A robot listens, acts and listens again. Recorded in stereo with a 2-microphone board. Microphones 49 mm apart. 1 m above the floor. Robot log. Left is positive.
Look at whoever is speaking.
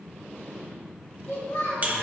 cmd yaw +90
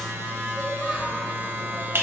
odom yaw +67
note: Nothing new. It was at 25° left.
cmd yaw +25
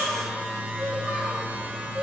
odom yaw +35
note: Nothing new. It was at 10° right.
cmd yaw -10
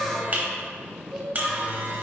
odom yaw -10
end: Found it: a child speaking, straight ahead.